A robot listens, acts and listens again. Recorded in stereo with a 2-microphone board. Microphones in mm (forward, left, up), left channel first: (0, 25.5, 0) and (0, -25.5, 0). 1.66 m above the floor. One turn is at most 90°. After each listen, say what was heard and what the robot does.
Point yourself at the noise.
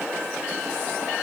Keep listening.
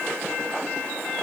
Keep listening.
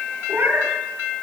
The cat meowing: about 50° right or 130° right. Turn 50° right.
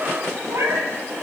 So it is at 65° right. Turn 65° right.
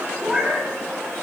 Found it: a cat meowing, straight ahead.